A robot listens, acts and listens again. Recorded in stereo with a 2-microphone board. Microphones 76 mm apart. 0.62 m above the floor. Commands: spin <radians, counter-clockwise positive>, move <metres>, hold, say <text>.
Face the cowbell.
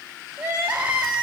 hold
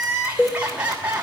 spin 0.52
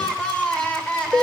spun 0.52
spin 2.01
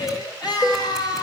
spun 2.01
spin 0.61
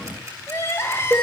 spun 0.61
spin -0.17
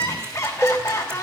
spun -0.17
say Found it: a cowbell, straight ahead, 1 to 2 m away.